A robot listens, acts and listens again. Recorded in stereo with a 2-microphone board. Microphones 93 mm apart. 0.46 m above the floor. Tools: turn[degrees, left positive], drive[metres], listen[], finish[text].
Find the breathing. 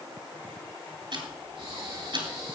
Thought: The breathing: about 75° right or 105° right.
Action: turn[-75]
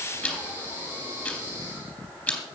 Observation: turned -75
Thought: So it is at 30° right.
Action: turn[-30]
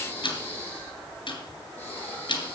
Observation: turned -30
Thought: The breathing is now 20° left.
Action: turn[20]
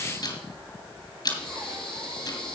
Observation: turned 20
Action: finish[Facing the breathing.]